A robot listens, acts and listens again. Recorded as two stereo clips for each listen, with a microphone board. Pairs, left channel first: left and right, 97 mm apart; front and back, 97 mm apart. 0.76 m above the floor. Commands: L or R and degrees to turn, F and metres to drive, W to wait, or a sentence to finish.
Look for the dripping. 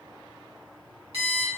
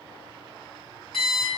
W
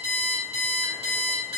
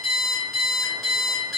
W
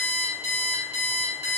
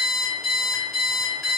I can't make out dripping, only an alarm clock.